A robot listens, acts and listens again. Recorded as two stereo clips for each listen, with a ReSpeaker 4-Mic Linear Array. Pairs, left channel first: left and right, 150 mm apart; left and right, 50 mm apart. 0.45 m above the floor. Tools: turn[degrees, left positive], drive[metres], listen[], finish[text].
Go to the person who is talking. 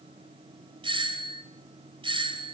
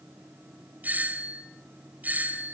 Action: listen[]
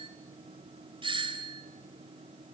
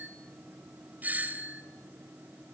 Action: listen[]
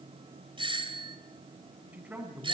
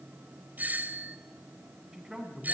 Action: turn[-30]
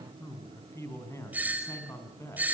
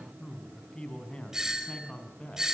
Thought: So it is at 20° left.
Action: turn[20]
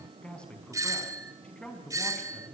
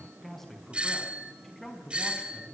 Action: drive[1.0]
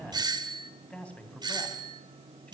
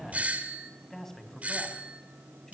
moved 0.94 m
Thought: The man speaking is now 10° left.
Action: turn[10]
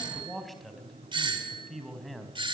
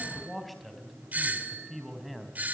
Action: drive[1.0]
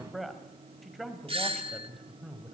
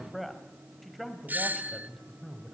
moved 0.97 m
Action: drive[1.0]
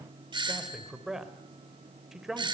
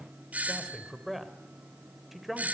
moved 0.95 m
Action: drive[1.0]
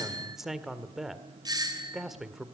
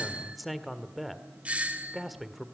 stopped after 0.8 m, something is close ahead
Action: finish[I am next to the man speaking.]